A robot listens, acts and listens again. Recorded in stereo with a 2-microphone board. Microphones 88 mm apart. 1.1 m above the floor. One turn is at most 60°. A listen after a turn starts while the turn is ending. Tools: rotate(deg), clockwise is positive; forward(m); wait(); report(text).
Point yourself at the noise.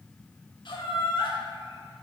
rotate(-60)
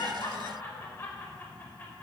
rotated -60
rotate(-30)
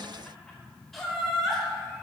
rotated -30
report("Facing the laughter, 2 to 4 m away.")